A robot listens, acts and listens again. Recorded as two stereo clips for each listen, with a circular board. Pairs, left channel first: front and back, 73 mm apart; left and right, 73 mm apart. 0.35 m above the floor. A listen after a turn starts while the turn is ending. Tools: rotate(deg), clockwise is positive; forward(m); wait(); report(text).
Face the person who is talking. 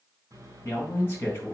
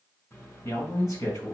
rotate(-55)
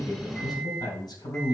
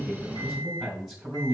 report("Facing the man speaking.")